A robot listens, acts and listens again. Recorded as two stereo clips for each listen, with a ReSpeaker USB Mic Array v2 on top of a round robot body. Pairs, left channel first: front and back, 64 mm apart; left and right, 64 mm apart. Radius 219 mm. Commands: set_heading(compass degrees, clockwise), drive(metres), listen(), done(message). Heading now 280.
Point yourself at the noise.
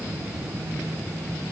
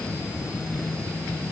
listen()
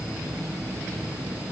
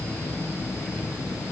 listen()
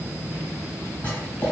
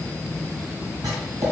set_heading(345)
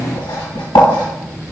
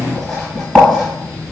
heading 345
done("Found it: writing, straight ahead, 1 to 2 m away.")